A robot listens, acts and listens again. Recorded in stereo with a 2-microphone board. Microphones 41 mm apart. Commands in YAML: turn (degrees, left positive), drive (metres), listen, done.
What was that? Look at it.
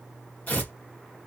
turn: 40
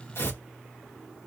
turn: 100
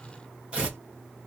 turn: -25
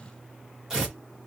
turn: -10
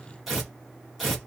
done: "Found it: tearing paper, straight ahead, 1 to 2 m away."